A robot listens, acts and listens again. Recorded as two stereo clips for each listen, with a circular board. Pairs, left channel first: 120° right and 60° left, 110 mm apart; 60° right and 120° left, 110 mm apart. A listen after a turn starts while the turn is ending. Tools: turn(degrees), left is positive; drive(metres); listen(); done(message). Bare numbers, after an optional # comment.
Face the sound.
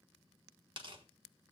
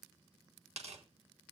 # The tearing paper: 100° left.
turn(100)
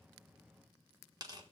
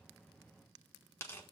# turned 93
# The tearing paper is now 10° left.
turn(10)
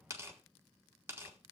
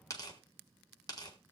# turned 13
done("Found it: tearing paper, straight ahead.")